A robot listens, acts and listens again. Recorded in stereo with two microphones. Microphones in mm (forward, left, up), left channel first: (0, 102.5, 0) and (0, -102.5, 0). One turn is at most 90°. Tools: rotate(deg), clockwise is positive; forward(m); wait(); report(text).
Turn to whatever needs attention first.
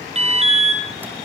rotate(30)
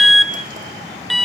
report("Facing the alarm, 2 to 4 m away.")